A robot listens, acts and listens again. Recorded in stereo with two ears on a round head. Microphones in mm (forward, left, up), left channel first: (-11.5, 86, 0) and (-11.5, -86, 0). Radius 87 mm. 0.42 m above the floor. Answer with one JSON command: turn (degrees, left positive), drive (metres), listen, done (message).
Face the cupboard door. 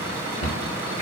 {"turn": 65}
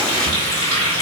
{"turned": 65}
{"listen": true}
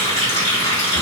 {"listen": true}
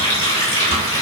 {"done": "I heard a cupboard door, but can't make it out now. It was about straight ahead or 50° left."}